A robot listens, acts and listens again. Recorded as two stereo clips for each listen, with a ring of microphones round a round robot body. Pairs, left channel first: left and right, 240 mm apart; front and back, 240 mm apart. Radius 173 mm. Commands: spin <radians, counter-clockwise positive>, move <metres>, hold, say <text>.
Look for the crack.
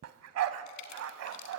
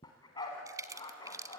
spin 1.83
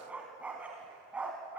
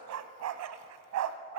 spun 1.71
say Facing where the crack came from. I can't hear it now.